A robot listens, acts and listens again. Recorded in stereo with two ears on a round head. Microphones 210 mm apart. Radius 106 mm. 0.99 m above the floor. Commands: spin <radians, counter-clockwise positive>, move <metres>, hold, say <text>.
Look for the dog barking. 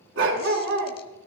spin -0.87
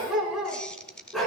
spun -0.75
say Found it: a dog barking, straight ahead.